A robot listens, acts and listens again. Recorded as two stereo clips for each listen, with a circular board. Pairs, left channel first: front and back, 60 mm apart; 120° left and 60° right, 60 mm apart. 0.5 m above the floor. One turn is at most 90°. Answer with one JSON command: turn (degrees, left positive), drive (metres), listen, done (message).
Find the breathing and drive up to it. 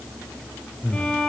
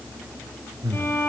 {"turn": -65}
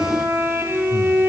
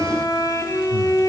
{"listen": true}
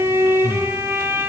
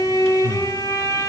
{"drive": 1.0}
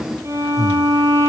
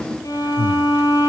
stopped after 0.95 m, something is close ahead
{"done": "I am next to the breathing."}